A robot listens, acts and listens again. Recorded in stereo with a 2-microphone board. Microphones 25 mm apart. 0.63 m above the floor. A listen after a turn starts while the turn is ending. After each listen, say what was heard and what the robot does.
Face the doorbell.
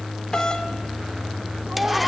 The doorbell: about 30° left or 150° left. Turn 30° left.
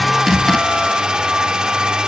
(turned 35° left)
Keep listening.
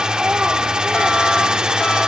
Keep listening.
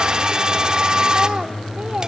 I heard a doorbell, but can't make it out now. It was about 5° right or 115° left.